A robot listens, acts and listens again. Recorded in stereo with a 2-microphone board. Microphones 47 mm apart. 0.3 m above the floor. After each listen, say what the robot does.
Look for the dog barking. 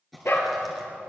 Turn 65° left.
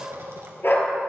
Turn 50° left.
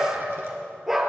Facing the dog barking.